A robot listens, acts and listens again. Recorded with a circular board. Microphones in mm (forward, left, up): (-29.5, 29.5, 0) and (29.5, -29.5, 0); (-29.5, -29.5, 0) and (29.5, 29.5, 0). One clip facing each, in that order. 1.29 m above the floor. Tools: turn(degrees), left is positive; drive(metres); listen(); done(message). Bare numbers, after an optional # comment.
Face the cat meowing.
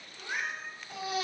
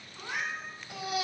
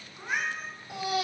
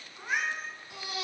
# The cat meowing: 50° right.
turn(-50)
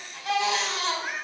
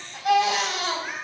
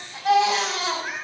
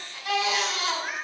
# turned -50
done("Found it: a cat meowing, straight ahead, over 4 m away.")